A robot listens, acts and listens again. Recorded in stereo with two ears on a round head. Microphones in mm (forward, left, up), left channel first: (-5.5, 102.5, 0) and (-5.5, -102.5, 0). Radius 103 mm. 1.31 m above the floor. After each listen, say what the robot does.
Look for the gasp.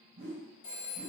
Keep listening.
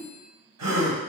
Turn 75° right.
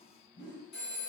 Keep listening.
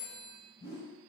I heard a gasp, but can't make it out now. It was about straight ahead or 30° right.